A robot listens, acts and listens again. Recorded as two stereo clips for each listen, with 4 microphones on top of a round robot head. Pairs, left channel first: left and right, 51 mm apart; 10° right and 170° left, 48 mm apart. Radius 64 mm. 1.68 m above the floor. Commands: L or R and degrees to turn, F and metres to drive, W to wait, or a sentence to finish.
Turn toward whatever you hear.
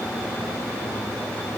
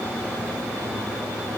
W
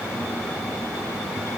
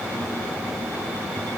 W
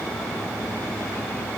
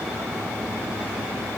I can't make out anything.